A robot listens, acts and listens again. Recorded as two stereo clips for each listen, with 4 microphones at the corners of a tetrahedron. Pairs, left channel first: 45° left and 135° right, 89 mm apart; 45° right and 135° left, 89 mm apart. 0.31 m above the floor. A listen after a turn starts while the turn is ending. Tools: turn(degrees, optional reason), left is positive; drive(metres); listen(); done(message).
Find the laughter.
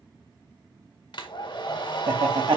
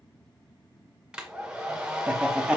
turn(degrees=-150, reason="The laughter: 150° right.")
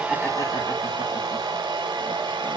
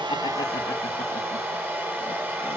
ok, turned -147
listen()
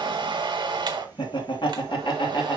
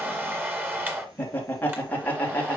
turn(degrees=25, reason="The laughter is now 25° left.")
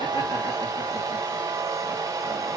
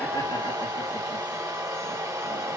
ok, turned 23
listen()
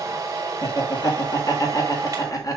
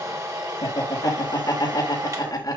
done("Facing the laughter.")